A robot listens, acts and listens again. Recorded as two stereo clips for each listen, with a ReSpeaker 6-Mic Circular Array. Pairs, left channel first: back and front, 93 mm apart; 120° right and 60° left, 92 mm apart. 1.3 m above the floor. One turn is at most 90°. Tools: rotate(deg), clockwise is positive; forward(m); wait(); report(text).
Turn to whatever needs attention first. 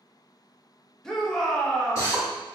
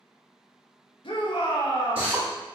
rotate(90)
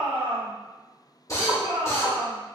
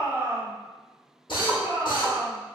report("Facing the shout.")